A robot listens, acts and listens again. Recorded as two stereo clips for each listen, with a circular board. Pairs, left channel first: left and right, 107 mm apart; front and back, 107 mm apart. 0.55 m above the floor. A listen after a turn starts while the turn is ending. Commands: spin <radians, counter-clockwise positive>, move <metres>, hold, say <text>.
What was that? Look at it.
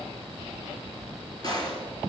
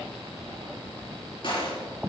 spin 0.70
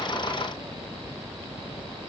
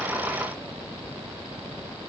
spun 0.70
say Facing where the gunshot came from. I can't hear it now.